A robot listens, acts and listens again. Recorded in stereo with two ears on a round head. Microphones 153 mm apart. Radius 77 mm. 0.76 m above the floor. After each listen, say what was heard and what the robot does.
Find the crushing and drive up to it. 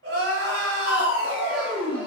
The crushing: about 35° left or 145° left. Turn 35° left.
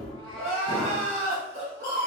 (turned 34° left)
So it is at 110° left. Turn 110° left.
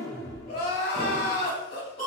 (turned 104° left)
Drive 1.0 m forward.
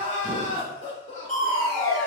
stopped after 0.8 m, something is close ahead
Arrived at the crushing, straight ahead.